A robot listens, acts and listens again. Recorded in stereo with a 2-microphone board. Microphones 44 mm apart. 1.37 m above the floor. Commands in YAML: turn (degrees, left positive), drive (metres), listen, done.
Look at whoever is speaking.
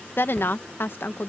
turn: 60
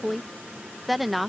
done: "Facing the woman speaking."